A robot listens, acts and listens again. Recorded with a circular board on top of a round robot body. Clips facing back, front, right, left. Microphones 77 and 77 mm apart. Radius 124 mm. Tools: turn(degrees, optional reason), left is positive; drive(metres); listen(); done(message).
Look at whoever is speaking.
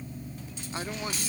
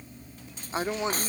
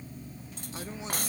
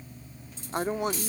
turn(degrees=65, reason="The woman speaking: 65° left.")
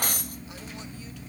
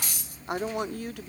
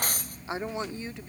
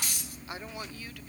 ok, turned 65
turn(degrees=-25, reason="The woman speaking is now 25° right.")
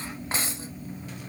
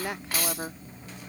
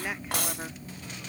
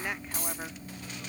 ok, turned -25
listen()
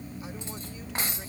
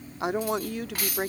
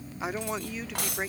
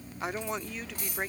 done("Found it: a woman speaking, straight ahead.")